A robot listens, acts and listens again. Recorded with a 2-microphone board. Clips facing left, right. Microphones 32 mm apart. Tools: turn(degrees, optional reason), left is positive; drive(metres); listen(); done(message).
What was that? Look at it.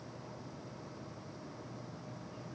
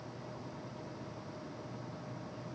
listen()
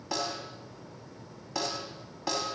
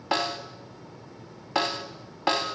turn(degrees=-50, reason="The snare drum: about 50° right or 130° right.")
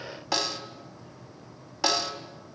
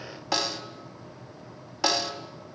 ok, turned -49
done("Found it: a snare drum, straight ahead, 2 to 4 m away.")